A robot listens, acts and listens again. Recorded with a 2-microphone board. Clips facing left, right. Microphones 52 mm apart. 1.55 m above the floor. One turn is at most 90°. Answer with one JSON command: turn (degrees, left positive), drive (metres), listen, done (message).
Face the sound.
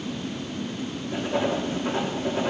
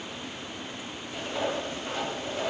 {"turn": 45}
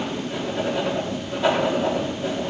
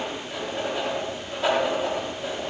{"done": "Found it: writing, straight ahead, 2 to 4 m away."}